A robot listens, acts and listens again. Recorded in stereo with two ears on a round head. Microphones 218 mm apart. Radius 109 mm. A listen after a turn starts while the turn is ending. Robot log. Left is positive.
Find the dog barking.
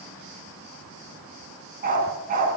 note: The dog barking: about 35° right or 145° right.
cmd yaw -35
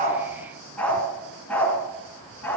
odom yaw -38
end: Found it: a dog barking, straight ahead.